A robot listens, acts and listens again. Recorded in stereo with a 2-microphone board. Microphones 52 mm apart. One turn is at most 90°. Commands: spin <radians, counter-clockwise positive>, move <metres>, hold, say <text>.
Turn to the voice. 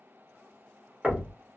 hold
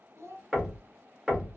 spin -1.13
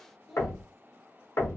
say Facing the child speaking.